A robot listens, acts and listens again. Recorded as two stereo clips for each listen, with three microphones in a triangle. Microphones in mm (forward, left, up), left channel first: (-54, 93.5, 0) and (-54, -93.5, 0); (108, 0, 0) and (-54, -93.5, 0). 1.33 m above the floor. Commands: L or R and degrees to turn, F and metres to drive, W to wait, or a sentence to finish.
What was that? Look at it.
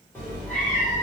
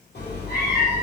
Found it: a cat meowing, straight ahead.